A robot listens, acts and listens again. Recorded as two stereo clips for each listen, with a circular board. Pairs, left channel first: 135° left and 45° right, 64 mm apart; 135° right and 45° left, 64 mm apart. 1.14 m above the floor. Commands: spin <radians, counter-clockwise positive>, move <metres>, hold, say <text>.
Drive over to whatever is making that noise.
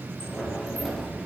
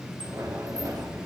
spin 0.87
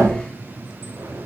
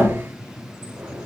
move 1.0
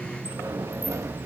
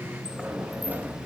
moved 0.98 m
spin -0.26
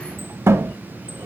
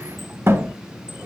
move 1.0
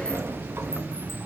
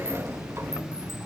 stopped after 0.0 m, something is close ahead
say I am next to the sliding door.